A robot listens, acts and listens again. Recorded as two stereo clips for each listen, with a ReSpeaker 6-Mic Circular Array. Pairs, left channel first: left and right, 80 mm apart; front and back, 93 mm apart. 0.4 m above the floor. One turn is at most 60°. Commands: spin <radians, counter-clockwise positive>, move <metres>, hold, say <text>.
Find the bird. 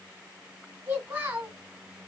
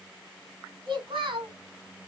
hold
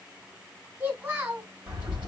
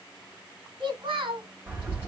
spin -1.05
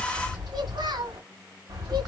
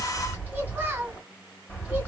spin -1.05
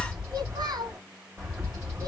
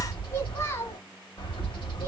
spin -0.26
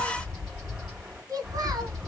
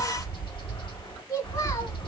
say Found it: a bird, straight ahead, 2 to 4 m away.